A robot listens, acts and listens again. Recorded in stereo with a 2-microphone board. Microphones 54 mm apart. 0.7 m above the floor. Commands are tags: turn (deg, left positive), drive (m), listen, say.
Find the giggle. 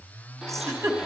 <turn deg="-70"/>
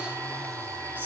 <listen/>
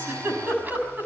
<turn deg="-40"/>
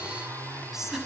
<turn deg="-10"/>
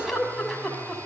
<say>Found it: a giggle, straight ahead.</say>